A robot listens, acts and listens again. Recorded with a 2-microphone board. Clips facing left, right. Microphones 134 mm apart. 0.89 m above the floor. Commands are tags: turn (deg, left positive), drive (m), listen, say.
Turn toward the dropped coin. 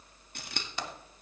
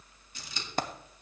<turn deg="-50"/>
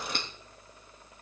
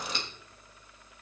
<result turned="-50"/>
<listen/>
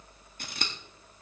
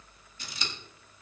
<say>I heard a dropped coin, but can't make it out now. It was about straight ahead or 80° right.</say>